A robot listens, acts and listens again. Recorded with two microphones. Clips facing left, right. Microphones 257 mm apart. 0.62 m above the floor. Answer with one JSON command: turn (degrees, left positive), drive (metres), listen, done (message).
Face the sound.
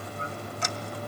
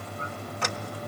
{"turn": -70}
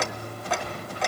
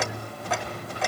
{"done": "Found it: ticking, straight ahead."}